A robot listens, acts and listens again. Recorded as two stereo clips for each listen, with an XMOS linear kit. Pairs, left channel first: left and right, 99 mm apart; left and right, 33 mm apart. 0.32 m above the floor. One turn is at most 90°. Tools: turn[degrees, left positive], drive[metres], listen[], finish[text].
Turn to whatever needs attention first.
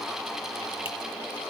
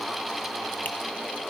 Action: listen[]
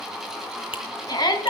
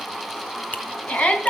Thought: The shout: about 45° left or 135° left.
Action: turn[45]
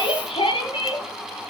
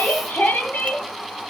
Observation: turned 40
Thought: So it is at 90° left.
Action: turn[90]
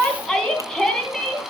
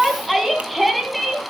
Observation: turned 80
Thought: The shout is now 10° left.
Action: turn[10]
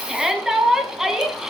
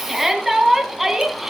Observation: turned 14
Action: finish[Facing the shout.]